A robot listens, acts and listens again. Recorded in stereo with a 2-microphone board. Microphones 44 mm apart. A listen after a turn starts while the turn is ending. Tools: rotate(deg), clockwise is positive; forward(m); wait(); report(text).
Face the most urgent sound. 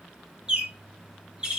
wait()
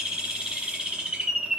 wait()
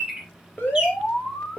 rotate(-45)
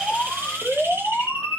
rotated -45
rotate(-10)
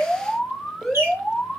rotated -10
report("Facing the alarm.")